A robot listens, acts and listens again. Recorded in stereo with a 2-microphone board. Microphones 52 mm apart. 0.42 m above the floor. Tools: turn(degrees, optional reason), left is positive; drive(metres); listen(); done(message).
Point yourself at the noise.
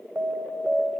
turn(degrees=-50, reason="The alarm: about 50° right or 130° right.")
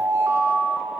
turn(degrees=-75, reason="So it is at 75° right.")
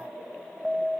turn(degrees=-10, reason="The alarm is now 10° right.")
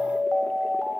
done("Found it: an alarm, straight ahead.")